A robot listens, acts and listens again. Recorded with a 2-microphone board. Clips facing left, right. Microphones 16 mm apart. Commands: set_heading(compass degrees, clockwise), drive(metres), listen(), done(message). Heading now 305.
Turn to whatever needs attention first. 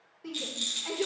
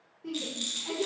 set_heading(265)
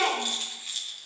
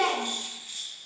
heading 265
set_heading(165)
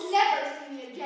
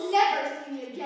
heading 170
set_heading(160)
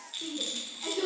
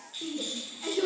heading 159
done("Found it: a shout, straight ahead, 2 to 4 m away.")